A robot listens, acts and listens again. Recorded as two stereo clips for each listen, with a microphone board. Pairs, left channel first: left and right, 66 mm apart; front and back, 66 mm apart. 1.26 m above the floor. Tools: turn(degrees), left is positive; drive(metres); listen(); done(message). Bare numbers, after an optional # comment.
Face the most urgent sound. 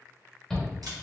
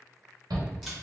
# The shout: 175° left.
turn(175)
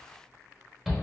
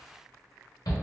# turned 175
done("Facing the shout, 1 to 2 m away.")